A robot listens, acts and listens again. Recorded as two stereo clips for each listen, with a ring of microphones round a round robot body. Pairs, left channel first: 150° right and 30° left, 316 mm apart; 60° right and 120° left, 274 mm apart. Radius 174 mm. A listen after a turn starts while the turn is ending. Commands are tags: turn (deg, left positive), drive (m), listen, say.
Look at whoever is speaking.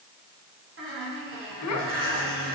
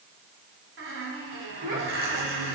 <turn deg="180"/>
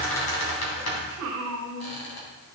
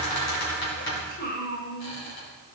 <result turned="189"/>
<turn deg="-10"/>
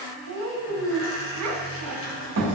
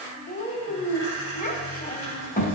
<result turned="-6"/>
<say>Facing the child speaking, 2 to 4 m away.</say>